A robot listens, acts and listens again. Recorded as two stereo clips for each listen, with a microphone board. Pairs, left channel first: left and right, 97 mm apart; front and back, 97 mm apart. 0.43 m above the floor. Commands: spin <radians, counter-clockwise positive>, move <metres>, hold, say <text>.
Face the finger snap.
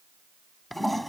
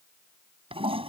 hold
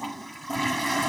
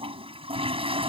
hold
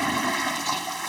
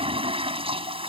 say I can't make out a finger snap to turn to.